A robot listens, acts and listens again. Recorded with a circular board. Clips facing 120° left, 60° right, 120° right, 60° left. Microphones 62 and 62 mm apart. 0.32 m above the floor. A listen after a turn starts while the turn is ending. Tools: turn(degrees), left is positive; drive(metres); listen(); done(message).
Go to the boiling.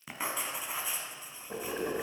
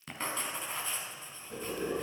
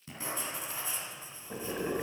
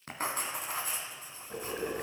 turn(degrees=155)
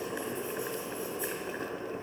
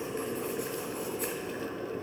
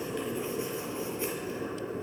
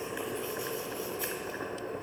turn(degrees=60)
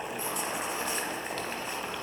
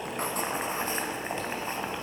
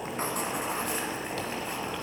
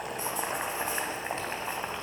drive(metres=1.0)
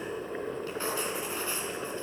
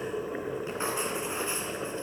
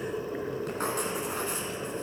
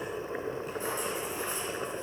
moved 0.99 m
turn(degrees=20)
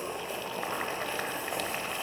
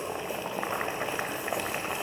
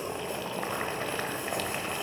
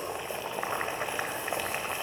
drive(metres=1.0)
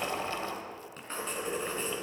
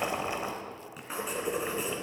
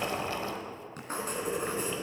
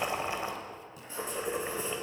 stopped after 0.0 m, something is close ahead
done("I am next to the boiling.")